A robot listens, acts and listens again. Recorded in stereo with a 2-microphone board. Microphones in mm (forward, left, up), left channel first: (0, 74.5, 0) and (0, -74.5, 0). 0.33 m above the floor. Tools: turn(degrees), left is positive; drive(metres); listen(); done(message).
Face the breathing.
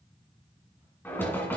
listen()
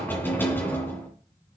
listen()
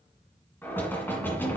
done("I can't make out breathing, only knocking.")